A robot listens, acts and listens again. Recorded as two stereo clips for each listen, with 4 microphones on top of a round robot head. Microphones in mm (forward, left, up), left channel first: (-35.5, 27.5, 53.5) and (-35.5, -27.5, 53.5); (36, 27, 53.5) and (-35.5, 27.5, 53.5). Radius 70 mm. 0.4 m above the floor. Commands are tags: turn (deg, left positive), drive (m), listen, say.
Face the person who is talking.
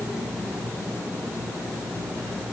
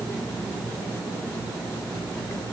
<listen/>
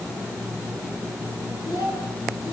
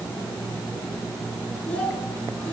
<turn deg="70"/>
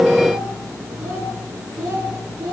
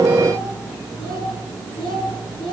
<turn deg="-25"/>
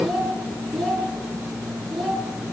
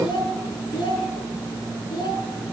<say>Facing the child speaking, over 4 m away.</say>